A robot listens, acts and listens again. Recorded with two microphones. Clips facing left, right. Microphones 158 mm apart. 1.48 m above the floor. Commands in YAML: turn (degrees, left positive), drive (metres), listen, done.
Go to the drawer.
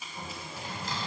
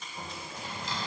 turn: 50
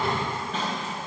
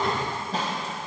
turn: 10
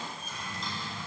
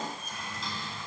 drive: 1.0
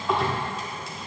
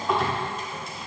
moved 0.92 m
drive: 1.0
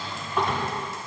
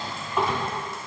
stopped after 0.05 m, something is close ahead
done: "I am next to the drawer."